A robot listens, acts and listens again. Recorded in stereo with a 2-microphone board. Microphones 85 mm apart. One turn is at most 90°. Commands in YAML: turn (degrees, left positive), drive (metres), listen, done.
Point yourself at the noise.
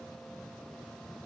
listen: true
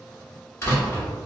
turn: 30
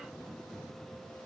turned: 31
listen: true
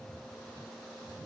done: "I heard a door slam, but can't make it out now. It was about straight ahead or 120° left."